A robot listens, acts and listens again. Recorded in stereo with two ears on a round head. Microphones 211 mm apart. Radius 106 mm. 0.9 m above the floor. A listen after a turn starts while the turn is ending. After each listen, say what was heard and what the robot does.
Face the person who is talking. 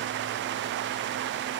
Keep listening.
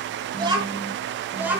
Turn 30° right.
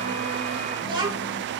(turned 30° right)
The child speaking: about 20° right or 160° right. Turn 20° right.
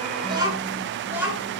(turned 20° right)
Turn 30° right.
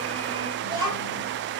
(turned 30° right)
So it is at 160° right. Turn 160° right.
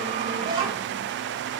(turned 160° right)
The child speaking is now 20° right. Turn 20° right.
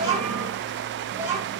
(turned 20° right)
The child speaking is now 10° right. Turn 10° right.
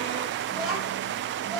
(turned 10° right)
Found it: a child speaking, straight ahead.